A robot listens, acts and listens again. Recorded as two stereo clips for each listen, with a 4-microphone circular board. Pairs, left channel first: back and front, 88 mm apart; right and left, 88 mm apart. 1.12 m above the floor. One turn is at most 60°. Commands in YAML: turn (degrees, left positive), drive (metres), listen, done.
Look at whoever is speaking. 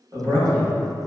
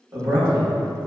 turn: 45
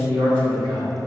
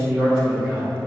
turn: 15
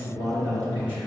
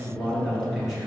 done: "Facing the man speaking, 1 to 2 m away."